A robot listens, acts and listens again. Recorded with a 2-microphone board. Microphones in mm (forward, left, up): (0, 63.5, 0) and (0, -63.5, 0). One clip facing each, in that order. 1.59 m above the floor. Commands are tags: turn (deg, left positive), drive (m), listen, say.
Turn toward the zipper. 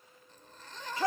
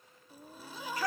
<turn deg="-30"/>
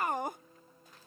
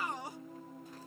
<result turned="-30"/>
<listen/>
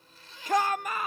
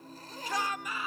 <turn deg="-140"/>
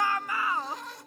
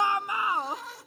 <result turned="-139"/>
<say>Found it: a zipper, straight ahead.</say>